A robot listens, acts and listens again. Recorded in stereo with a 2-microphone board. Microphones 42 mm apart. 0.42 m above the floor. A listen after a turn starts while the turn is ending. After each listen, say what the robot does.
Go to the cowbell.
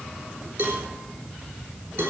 Turn 65° right.
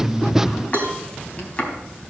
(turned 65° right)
Turn 50° right.
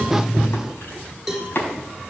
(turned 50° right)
Drive 1.0 m forward.
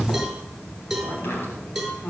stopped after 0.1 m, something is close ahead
Something is in my way. I am facing the cowbell but have not reached it.